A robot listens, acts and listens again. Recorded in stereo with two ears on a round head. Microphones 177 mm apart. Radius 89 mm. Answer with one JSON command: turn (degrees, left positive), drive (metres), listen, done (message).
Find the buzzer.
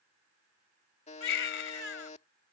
{"turn": 35}
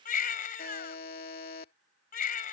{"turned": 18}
{"turn": 130}
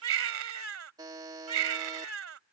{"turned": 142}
{"turn": -25}
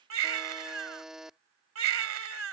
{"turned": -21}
{"done": "Found it: a buzzer, straight ahead."}